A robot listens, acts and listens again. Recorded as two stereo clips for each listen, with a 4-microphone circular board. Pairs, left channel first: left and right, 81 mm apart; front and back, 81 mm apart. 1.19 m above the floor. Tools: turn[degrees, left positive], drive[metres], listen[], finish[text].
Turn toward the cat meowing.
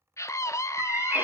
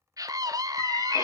Thought: The cat meowing: 25° right.
Action: turn[-25]
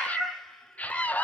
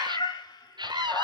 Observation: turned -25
Thought: The cat meowing is now 20° left.
Action: turn[20]
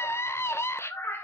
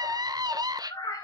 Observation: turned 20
Thought: The cat meowing is now 30° left.
Action: turn[30]
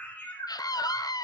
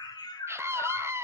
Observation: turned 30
Thought: The cat meowing is now 30° left.
Action: turn[30]
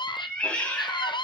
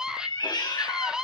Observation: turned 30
Thought: The cat meowing is now 20° left.
Action: turn[20]
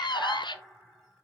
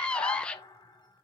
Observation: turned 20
Action: listen[]
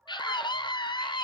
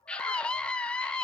Action: listen[]
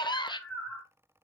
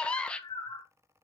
Action: finish[Found it: a cat meowing, straight ahead, 2 to 4 m away.]